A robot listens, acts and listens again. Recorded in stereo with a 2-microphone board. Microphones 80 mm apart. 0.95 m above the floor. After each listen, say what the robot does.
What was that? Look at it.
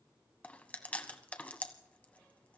Turn 20° left.
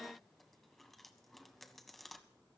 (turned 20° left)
Found it: chewing, straight ahead, 1 to 2 m away.